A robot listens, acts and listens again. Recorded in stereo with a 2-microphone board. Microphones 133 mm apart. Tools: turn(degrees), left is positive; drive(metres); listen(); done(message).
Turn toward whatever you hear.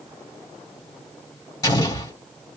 turn(degrees=30)
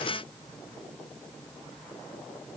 listen()
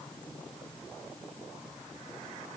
done("I heard an explosion, but can't make it out now. It was about straight ahead or 120° left.")